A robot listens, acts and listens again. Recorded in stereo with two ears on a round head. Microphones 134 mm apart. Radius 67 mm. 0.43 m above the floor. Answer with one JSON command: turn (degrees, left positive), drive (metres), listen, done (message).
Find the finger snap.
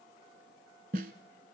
{"listen": true}
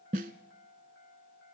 {"listen": true}
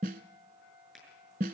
{"turn": 30}
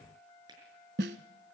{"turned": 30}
{"turn": -30}
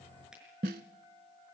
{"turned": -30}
{"listen": true}
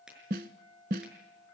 {"done": "Found it: a finger snap, straight ahead."}